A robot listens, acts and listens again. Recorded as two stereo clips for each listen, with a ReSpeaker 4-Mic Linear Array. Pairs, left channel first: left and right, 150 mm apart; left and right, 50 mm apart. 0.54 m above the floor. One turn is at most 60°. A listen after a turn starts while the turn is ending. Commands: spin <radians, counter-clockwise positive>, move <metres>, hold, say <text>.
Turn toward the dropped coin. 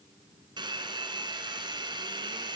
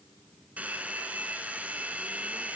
hold
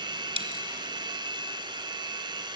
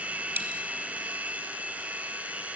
spin -0.70
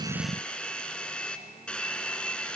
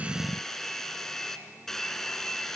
hold
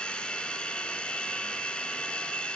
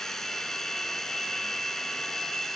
say I heard a dropped coin, but can't make it out now. It was about straight ahead or 100° right.